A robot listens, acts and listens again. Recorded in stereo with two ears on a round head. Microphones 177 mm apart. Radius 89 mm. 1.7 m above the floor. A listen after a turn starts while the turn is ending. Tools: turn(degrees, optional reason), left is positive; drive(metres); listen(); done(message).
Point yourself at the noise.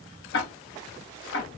turn(degrees=60, reason="The ticking: about 60° left or 120° left.")
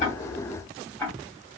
turn(degrees=10, reason="So it is at 10° left.")
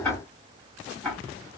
done("Facing the ticking.")